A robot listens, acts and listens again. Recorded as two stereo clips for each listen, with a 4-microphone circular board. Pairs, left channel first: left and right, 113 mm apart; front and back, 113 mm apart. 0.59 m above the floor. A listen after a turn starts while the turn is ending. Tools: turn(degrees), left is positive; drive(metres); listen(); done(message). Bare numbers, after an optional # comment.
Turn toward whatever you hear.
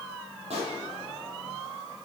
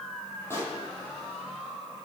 # The pop: 70° right.
turn(-70)
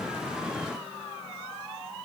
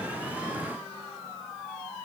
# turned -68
done("I heard a pop from this way, but can't make it out now.")